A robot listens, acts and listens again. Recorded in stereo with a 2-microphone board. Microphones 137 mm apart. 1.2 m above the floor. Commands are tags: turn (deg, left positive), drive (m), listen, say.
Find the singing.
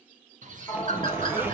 <turn deg="30"/>
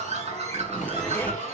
<turn deg="115"/>
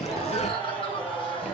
<say>Facing the singing.</say>